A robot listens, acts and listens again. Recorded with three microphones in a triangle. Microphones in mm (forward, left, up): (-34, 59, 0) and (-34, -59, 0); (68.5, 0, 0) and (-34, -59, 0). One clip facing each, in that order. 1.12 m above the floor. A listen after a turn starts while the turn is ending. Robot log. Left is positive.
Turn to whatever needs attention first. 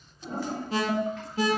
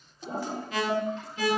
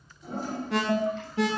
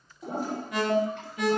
note: The alarm: 35° left.
cmd yaw +35
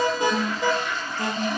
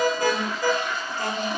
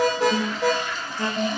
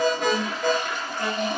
note: The alarm is now 25° left.
cmd yaw +25
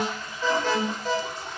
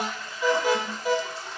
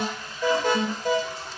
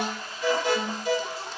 note: The alarm is now 10° right.
cmd yaw -10
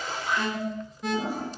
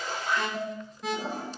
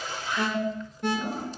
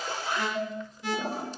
end: Found it: an alarm, straight ahead, 1 to 2 m away.